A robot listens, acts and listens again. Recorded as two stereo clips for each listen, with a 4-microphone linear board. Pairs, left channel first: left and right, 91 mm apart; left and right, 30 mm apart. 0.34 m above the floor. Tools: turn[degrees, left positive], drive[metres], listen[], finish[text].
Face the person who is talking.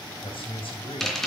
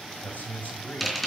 Action: turn[90]
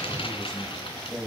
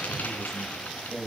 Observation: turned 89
Action: finish[Facing the man speaking.]